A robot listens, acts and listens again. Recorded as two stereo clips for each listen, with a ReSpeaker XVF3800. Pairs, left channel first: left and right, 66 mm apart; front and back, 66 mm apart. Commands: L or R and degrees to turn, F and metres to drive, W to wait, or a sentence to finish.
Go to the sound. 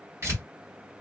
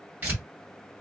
R125
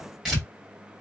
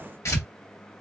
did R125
R10
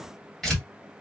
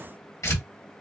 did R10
F1.0
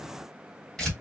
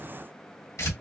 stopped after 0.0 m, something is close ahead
Something is in my way. I am facing the tearing paper but have not reached it.